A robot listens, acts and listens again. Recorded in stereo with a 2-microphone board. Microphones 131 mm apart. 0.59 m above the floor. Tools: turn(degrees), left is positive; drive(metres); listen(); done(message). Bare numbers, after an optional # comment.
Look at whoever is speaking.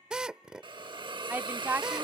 turn(-30)
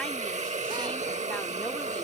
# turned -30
listen()
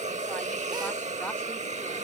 listen()
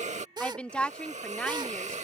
# So it is at 10° left.
turn(10)
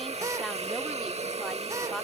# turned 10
listen()
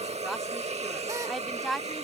done("Facing the woman speaking.")